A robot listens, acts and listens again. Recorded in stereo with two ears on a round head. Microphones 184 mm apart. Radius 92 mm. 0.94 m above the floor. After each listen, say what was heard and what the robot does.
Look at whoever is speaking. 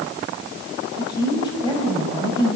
The woman speaking: about 20° left or 160° left. Turn 20° left.
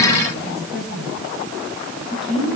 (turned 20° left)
Found it: a woman speaking, straight ahead.